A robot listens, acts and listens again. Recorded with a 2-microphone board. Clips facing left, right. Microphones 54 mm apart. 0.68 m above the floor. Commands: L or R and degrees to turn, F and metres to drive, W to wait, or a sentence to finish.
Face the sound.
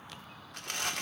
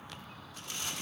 L65
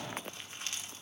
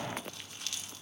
L30
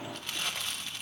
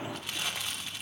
Facing the crumpling.